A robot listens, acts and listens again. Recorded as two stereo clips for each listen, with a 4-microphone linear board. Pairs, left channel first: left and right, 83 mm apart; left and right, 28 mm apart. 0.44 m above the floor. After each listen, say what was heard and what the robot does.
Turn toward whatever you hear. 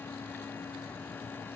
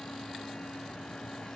Keep listening.
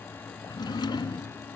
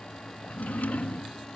The drawer: about 60° left or 120° left. Turn 60° left.
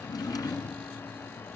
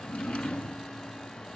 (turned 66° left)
So it is at 50° left. Turn 50° left.
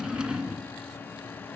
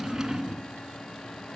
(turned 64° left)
The drawer is now 10° right. Turn 10° right.
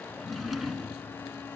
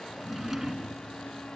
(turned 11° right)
Facing the drawer, 2 to 4 m away.